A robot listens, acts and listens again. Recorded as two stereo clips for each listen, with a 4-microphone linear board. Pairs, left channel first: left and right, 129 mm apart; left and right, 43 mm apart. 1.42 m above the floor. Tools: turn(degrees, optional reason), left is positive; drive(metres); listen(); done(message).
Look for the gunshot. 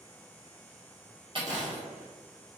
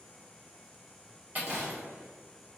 turn(degrees=-70, reason="The gunshot: about 70° right or 110° right.")
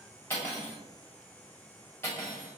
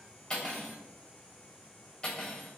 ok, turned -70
listen()
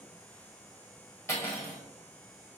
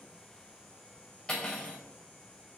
done("I heard a gunshot, but can't make it out now. It was about straight ahead or 40° right.")